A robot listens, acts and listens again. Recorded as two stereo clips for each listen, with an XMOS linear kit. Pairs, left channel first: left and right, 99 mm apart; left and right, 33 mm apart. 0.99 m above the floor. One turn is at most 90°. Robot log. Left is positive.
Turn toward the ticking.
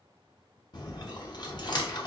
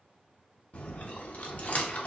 cmd idle
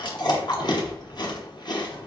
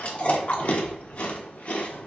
cmd idle
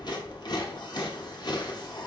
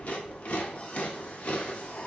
end: I can't make out ticking to turn to.